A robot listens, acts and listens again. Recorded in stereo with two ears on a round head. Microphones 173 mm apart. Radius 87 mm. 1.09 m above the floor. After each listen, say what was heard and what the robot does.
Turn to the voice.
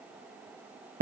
Keep listening.
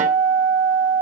Keep listening.
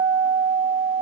I can't make out anyone speaking to turn to.